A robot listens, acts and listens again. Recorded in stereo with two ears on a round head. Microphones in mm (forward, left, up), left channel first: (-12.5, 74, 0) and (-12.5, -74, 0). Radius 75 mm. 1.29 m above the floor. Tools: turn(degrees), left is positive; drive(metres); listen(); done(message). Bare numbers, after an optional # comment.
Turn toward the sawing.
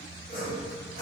# The sawing: about 60° left or 120° left.
turn(60)
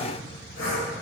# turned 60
# So it is at 60° left.
turn(60)
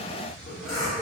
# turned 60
done("Facing the sawing, 1 to 2 m away.")